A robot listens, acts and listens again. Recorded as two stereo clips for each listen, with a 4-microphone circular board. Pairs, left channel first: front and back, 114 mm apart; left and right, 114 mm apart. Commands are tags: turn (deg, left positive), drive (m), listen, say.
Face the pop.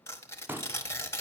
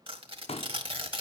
<turn deg="110"/>
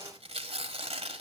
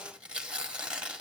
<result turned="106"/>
<say>Facing where the pop came from. I can't hear it now.</say>